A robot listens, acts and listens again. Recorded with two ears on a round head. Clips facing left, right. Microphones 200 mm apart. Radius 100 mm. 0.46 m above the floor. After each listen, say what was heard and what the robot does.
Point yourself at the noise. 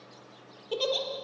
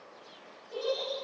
Turn 90° left.
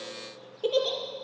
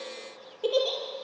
Facing the giggle.